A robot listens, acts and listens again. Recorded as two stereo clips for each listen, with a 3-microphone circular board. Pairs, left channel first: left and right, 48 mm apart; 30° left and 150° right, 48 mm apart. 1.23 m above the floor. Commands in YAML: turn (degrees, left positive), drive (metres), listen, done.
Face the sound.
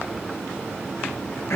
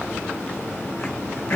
turn: 65
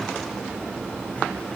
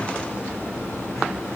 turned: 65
listen: true
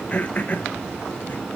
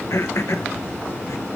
turn: 35
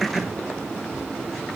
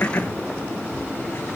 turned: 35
turn: -10
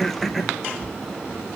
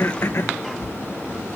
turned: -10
done: "Found it: throat clearing, straight ahead."